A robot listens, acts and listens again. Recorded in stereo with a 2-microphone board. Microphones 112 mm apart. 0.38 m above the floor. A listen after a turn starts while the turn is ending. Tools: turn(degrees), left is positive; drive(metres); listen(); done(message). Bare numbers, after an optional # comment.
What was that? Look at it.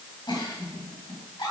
# The giggle: about 45° left or 135° left.
turn(45)
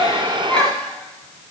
# So it is at 10° left.
turn(10)
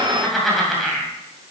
done("Found it: a giggle, straight ahead.")